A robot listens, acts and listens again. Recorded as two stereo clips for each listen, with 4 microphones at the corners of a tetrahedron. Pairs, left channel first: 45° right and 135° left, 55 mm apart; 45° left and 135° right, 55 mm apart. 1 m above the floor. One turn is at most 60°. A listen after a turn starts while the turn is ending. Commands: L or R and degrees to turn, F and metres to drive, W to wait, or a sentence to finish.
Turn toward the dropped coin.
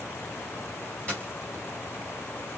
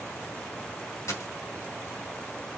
L20
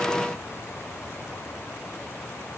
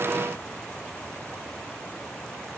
Facing where the dropped coin came from. I can't hear it now.